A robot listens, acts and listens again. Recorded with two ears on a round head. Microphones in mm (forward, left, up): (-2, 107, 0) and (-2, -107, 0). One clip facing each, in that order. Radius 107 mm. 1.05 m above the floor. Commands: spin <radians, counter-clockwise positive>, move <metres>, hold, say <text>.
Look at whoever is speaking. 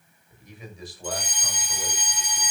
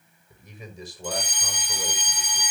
spin -1.57
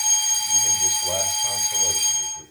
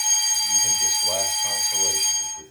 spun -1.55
say Found it: a man speaking, straight ahead.